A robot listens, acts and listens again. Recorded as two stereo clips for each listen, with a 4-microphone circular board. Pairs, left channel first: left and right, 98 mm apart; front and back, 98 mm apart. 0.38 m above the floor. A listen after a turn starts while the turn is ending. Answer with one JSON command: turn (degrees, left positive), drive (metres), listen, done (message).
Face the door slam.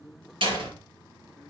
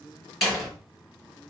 {"turn": -90}
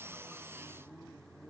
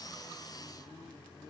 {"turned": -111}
{"turn": 25}
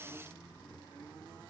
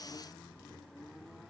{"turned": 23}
{"done": "Facing where the door slam came from. I can't hear it now."}